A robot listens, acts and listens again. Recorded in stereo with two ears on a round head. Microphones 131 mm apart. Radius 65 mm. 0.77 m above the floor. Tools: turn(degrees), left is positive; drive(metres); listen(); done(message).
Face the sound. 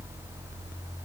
listen()
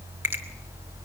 turn(degrees=-15)
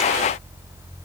listen()
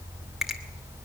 listen()
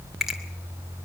done("Facing the finger snap, 2 to 4 m away.")